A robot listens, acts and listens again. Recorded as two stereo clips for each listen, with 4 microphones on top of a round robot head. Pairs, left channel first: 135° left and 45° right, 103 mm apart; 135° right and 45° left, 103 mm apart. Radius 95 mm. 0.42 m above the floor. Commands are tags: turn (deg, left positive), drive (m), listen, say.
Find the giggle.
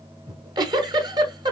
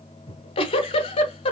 <turn deg="-95"/>
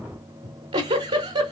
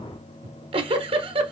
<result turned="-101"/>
<say>Found it: a giggle, straight ahead.</say>